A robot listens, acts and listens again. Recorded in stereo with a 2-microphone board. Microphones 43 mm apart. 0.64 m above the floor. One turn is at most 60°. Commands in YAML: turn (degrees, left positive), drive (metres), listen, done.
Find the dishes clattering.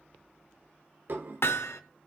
turn: -55
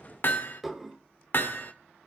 done: "Facing the dishes clattering."